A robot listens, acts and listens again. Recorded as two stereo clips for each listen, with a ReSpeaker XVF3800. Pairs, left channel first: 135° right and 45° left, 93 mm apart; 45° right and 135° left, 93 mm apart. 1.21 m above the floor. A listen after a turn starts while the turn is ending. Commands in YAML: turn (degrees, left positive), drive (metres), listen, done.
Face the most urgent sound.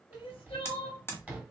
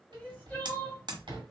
turn: -120
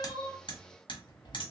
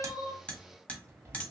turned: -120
listen: true
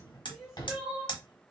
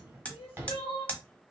turn: -45
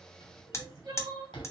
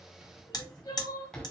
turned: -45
done: "Found it: crying, straight ahead."